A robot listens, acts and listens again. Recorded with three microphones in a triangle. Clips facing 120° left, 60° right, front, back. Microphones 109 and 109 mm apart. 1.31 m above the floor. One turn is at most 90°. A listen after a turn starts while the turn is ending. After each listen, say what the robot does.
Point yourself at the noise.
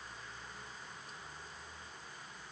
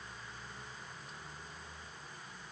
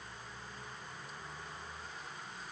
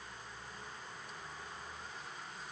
Keep listening.
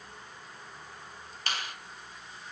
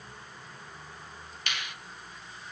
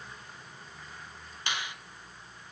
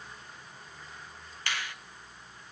Turn 70° left.
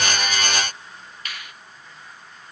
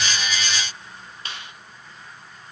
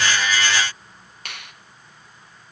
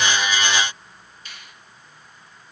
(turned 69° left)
Found it: a finger snap, straight ahead.